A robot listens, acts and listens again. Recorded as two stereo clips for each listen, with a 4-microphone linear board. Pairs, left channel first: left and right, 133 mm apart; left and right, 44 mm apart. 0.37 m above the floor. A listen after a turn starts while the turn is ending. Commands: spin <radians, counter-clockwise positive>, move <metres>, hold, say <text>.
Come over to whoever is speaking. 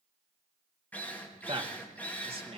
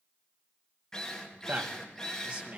spin -0.70
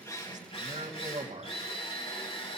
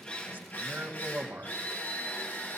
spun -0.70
spin -1.66
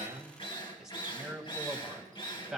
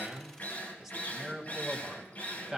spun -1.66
move 1.0
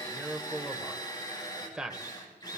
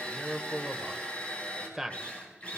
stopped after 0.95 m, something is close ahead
spin -0.17
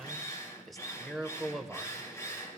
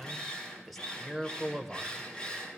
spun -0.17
say Arrived at the man speaking, straight ahead.